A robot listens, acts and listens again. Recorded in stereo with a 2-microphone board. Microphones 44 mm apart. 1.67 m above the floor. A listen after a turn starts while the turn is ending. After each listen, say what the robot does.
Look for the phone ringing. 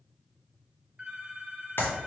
Turn 25° right.
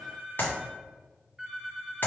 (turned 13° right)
Turn 10° right.
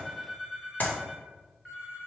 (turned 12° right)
Found it: a phone ringing, straight ahead.